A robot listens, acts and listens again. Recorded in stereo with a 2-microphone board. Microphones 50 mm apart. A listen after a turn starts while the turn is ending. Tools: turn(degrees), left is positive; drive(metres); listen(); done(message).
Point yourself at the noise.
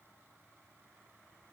listen()
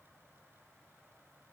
listen()
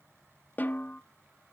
turn(degrees=35)
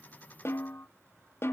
turn(degrees=105)
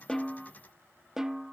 turn(degrees=-10)
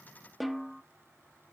done("Facing the snare drum, under 1 m away.")